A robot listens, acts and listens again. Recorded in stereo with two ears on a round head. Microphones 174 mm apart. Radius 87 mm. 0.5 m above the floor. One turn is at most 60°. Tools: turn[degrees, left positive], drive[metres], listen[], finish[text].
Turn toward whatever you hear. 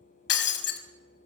Thought: The breaking glass: about 60° left or 120° left.
Action: turn[60]
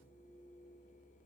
Action: listen[]
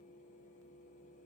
Action: finish[I heard breaking glass, but can't make it out now. It was about straight ahead or 60° left.]